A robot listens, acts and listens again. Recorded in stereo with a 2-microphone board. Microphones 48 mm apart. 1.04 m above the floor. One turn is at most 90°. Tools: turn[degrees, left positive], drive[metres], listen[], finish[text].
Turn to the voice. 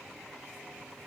Action: listen[]
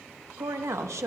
Action: turn[-90]
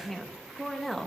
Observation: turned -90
Action: finish[Found it: a woman speaking, straight ahead.]